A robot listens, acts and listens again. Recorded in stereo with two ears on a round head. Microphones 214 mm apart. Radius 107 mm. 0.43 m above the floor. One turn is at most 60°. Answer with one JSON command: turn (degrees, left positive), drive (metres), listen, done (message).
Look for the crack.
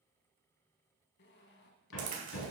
{"turn": -35}
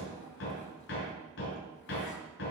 {"listen": true}
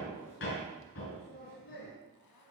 {"done": "I heard a crack, but can't make it out now. It was about straight ahead or 110° right."}